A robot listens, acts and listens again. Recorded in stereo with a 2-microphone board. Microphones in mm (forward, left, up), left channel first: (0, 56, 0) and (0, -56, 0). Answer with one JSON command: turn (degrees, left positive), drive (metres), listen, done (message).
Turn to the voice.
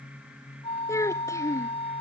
{"turn": 25}
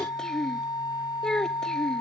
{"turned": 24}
{"done": "Facing the child speaking."}